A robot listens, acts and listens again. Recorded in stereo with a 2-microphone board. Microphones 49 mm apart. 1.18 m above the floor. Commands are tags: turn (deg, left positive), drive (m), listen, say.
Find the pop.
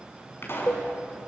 <turn deg="55"/>
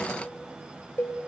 <listen/>
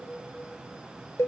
<say>I heard a pop, but can't make it out now. It was about straight ahead or 70° left.</say>